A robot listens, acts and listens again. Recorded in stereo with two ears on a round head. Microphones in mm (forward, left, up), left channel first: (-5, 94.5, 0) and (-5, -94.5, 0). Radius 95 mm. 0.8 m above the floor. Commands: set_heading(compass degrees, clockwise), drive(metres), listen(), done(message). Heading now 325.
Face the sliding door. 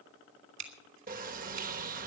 set_heading(5)
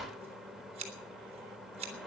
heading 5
done("Facing the sliding door, under 1 m away.")